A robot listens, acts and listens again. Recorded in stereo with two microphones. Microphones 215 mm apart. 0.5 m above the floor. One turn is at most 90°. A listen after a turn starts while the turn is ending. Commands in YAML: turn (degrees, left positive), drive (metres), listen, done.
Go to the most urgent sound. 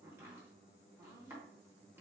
listen: true
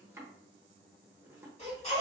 turn: 35
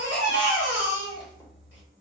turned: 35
turn: 90
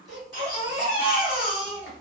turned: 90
turn: 30
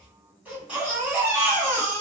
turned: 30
drive: 1.0
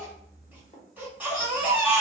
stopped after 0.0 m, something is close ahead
turn: -10
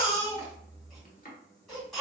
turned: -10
done: "Something is in my way. I am facing the baby crying but have not reached it."